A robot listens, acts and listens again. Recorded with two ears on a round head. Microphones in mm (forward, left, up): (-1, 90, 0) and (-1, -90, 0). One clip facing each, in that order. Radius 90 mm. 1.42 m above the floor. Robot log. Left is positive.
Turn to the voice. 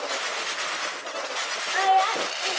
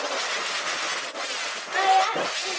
cmd yaw +30
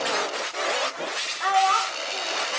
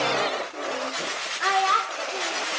note: So it is at 30° right.
cmd yaw -30
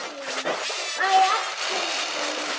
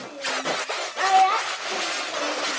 note: The child speaking is now 10° left.
cmd yaw +10
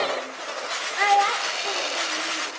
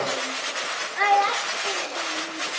end: Found it: a child speaking, straight ahead, 2 to 4 m away.